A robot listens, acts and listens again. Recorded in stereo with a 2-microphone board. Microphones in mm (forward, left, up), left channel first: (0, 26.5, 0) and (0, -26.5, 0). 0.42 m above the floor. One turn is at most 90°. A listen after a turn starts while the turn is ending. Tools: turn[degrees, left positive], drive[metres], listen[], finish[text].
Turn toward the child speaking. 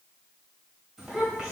Thought: The child speaking: about 15° right or 165° right.
Action: turn[-15]
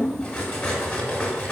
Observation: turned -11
Action: listen[]
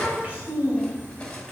Thought: The child speaking: about 30° right or 150° right.
Action: turn[-30]
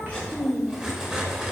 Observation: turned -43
Action: finish[Found it: a child speaking, straight ahead.]